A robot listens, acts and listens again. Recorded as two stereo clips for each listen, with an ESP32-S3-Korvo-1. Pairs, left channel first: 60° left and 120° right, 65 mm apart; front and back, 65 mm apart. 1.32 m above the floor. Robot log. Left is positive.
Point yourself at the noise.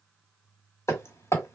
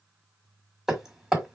note: The hammering: 100° left.
cmd yaw +100
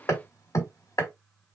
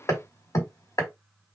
note: The hammering is now 30° left.
cmd yaw +30
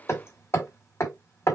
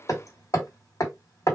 note: The hammering is now 20° left.
cmd yaw +20
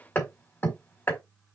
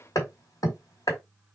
end: Found it: hammering, straight ahead.